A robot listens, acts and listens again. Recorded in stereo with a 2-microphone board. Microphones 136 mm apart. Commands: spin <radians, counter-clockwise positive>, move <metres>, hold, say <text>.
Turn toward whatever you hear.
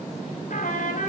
spin 1.57
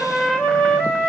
spin 0.17
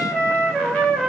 say Facing the trumpet.